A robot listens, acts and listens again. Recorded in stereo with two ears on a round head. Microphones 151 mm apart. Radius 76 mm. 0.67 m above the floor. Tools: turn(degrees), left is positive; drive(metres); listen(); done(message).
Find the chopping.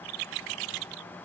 listen()
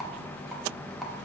listen()
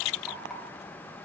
done("I can't make out chopping to turn to.")